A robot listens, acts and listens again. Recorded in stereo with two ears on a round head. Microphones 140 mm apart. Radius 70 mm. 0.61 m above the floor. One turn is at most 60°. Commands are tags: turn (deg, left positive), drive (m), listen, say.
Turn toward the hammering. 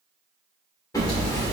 <turn deg="20"/>
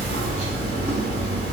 <turn deg="60"/>
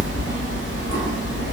<turn deg="60"/>
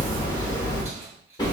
<turn deg="25"/>
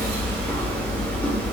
<turn deg="10"/>
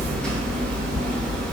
<say>Facing the hammering.</say>